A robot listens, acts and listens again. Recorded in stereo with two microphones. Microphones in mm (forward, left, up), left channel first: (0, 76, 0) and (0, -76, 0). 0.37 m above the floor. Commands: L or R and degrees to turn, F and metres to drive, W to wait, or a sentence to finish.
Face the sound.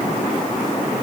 W
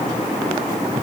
W
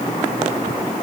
I can't make out anything.